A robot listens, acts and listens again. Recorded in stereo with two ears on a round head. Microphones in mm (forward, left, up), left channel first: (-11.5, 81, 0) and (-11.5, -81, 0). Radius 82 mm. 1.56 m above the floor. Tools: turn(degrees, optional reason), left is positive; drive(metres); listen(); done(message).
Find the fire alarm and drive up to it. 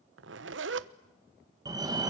turn(degrees=-20, reason="The fire alarm: about 20° right or 160° right.")
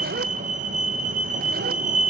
turn(degrees=-135, reason="So it is at 135° right.")
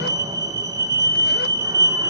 turn(degrees=-20, reason="The fire alarm is now 20° right.")
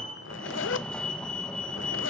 drive(metres=1.0)
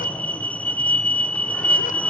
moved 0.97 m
turn(degrees=10, reason="The fire alarm is now 10° left.")
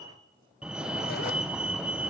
drive(metres=1.0)
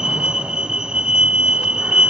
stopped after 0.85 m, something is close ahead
done("Arrived at the fire alarm, straight ahead.")